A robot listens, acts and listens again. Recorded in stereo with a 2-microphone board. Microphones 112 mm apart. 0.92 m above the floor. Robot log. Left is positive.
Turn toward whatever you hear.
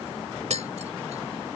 note: The tapping: about 75° right or 105° right.
cmd yaw -75
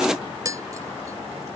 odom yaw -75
note: So it is at 30° right.
cmd yaw -30
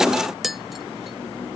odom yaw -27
end: Found it: tapping, straight ahead.